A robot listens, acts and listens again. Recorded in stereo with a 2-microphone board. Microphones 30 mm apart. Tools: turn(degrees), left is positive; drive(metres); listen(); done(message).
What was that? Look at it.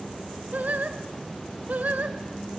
turn(degrees=-60)
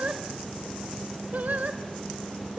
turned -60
turn(degrees=-55)
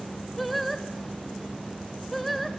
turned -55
done("Found it: singing, straight ahead, 2 to 4 m away.")